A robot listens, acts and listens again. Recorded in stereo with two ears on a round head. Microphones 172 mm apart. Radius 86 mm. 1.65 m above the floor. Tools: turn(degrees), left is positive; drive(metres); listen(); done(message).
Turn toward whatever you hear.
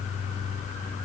listen()
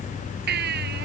turn(degrees=-55)
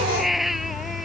done("Facing the baby crying.")